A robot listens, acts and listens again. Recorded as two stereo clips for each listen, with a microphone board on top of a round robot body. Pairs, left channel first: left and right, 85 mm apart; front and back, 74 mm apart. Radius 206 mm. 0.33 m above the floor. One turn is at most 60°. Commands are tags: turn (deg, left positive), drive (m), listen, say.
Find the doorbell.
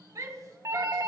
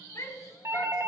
<turn deg="-60"/>
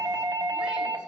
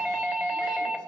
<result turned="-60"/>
<turn deg="-60"/>
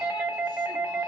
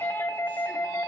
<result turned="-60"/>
<turn deg="-30"/>
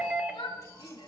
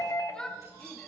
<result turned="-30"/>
<turn deg="-15"/>
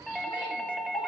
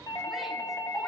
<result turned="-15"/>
<say>Found it: a doorbell, straight ahead, 2 to 4 m away.</say>